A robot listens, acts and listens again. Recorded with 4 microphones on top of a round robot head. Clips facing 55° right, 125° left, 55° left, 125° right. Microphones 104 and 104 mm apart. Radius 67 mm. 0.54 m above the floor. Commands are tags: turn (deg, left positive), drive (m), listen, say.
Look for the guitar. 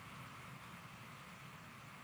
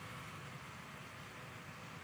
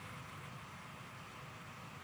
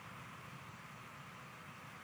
<listen/>
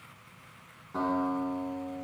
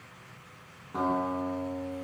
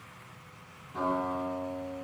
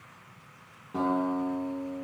<turn deg="-150"/>
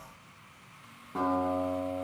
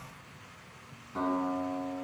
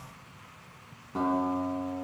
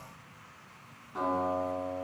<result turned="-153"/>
<say>Facing the guitar.</say>